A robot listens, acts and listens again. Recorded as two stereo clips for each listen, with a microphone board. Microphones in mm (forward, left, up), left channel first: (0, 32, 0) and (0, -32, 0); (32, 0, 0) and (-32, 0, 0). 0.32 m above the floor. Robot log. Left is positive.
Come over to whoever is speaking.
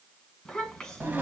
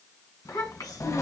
note: The child speaking: 10° left.
cmd yaw +10
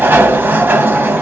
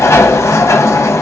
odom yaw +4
cmd idle
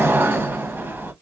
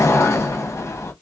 cmd idle
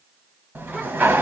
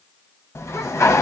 end: Facing where the child speaking came from. I can't hear it now. I did not reach it.